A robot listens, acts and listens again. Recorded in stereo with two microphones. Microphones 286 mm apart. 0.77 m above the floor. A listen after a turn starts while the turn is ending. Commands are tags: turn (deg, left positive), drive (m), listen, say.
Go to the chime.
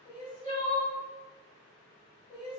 <listen/>
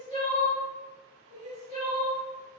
<listen/>
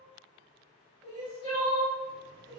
<say>I can't make out a chime, only crying.</say>